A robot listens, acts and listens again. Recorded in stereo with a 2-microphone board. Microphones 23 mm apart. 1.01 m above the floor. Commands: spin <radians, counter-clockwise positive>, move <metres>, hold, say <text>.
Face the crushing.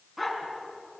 hold
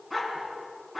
hold
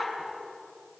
say I can't make out crushing, only a dog barking.